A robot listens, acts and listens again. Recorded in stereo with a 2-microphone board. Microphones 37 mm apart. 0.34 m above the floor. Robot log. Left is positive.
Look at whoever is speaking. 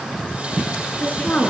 note: The woman speaking: about 40° left or 140° left.
cmd yaw +40
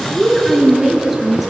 note: So it is at 10° right.
cmd yaw -10
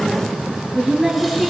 note: The woman speaking is now 10° right.
cmd yaw -10
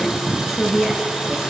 end: Found it: a woman speaking, straight ahead.